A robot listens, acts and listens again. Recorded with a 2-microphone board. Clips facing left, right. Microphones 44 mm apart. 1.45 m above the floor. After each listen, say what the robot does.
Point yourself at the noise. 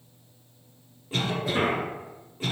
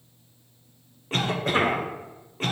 Turn 55° right.
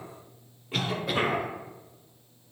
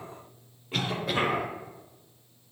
Facing the cough, under 1 m away.